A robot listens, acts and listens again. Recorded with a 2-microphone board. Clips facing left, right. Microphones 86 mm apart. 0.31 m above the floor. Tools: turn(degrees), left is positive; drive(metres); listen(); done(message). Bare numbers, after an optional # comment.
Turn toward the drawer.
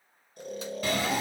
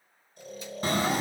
# The drawer: about 35° right or 145° right.
turn(-35)
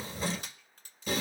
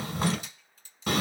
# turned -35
# So it is at 105° right.
turn(-105)
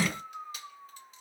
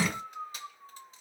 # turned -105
# The drawer is now 10° right.
turn(-10)
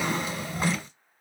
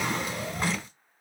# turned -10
done("Found it: a drawer, straight ahead.")